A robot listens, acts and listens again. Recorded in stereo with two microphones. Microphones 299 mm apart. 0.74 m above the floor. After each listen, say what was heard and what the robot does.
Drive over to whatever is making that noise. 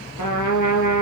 Turn 90° left.
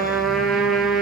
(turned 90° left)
Drive 1.0 m forward.
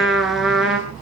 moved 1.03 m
Drive 1.0 m forward.
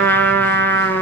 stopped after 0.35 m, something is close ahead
Something is in my way. I am facing the trumpet but have not reached it.